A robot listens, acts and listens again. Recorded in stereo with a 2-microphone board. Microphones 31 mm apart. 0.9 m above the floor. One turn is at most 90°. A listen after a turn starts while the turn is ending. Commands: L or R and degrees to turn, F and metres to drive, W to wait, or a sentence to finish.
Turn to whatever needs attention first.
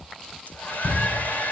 L45
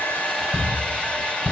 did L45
L90
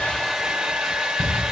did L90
L25
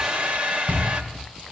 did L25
L10
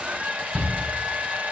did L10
Facing the shout.